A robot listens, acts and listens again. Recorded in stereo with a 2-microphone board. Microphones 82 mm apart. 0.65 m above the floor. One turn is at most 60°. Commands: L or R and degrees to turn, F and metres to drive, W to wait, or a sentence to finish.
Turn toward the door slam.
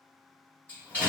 L20
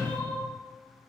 Facing the door slam, 2 to 4 m away.